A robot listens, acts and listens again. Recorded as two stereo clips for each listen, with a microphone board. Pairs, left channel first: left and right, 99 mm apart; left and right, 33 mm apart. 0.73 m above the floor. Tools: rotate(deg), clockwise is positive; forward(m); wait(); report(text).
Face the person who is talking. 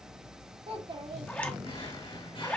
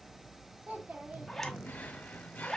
rotate(60)
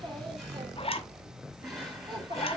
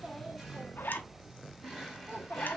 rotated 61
rotate(50)
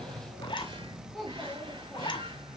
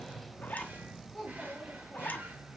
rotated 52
report("Facing the child speaking, 1 to 2 m away.")